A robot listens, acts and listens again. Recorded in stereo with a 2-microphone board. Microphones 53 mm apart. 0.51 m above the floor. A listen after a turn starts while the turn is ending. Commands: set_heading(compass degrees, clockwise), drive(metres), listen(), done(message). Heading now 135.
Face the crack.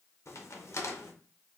set_heading(75)
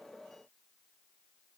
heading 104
listen()
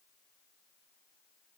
done("I heard a crack, but can't make it out now. It was about 30° left or 90° left.")